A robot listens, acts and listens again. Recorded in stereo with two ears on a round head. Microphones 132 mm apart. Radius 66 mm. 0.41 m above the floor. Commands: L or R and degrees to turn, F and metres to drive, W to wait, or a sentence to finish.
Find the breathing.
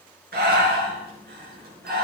R75
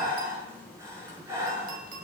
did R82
R20
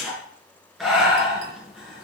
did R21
Found it: breathing, straight ahead.